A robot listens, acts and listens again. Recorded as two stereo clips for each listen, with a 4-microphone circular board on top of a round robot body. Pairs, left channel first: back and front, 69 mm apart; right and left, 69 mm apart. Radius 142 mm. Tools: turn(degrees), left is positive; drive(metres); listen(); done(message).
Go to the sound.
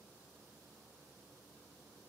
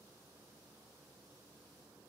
listen()
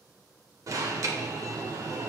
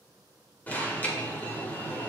turn(degrees=-25)
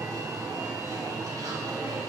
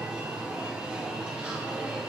turn(degrees=15)
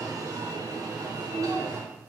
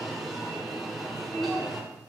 drive(metres=1.0)
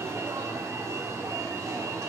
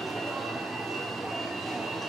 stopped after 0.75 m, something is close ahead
done("Arrived at the alarm, straight ahead.")